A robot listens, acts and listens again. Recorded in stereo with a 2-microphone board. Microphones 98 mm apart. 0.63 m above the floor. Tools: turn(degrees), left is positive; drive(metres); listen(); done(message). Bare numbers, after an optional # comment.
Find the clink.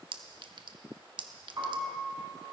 # The clink: about 55° right or 125° right.
turn(-55)
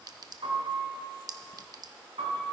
# So it is at 50° right.
turn(-50)
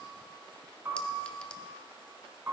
listen()
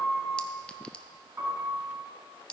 # The clink is now 15° left.
turn(15)
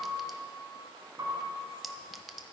done("Facing the clink, under 1 m away.")